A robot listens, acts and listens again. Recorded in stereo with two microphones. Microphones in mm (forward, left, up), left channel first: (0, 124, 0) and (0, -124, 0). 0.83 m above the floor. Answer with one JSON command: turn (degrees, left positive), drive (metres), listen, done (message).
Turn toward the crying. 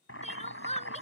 {"turn": 25}
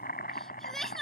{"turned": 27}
{"done": "Facing the crying."}